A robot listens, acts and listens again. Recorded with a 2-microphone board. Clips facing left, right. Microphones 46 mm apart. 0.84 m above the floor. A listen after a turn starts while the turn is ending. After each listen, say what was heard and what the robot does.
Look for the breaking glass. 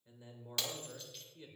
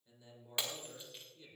The breaking glass: about 20° right or 160° right. Turn 20° right.
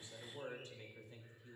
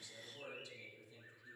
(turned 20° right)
Keep listening.
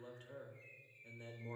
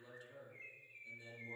I heard breaking glass, but can't make it out now. It was about straight ahead or 140° right.